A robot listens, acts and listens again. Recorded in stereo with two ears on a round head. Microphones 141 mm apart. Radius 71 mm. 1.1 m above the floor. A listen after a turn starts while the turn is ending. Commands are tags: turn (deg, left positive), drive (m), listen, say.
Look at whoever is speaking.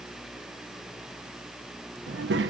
<turn deg="-90"/>
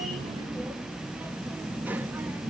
<turn deg="-10"/>
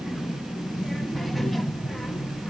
<say>Found it: a child speaking, straight ahead.</say>